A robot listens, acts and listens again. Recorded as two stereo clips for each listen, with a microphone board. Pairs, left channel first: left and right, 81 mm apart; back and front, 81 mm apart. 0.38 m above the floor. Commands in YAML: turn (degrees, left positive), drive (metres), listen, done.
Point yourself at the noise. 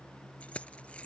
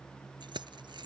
turn: 15
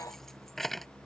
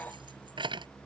done: "Found it: keys jangling, straight ahead."